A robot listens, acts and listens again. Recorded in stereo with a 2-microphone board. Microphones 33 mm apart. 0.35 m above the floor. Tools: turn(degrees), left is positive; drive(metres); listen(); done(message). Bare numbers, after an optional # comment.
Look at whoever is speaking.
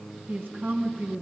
# The woman speaking: about 70° right or 110° right.
turn(-70)
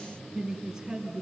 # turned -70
# So it is at 10° right.
turn(-10)
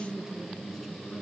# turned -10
done("Found it: a woman speaking, straight ahead, over 4 m away.")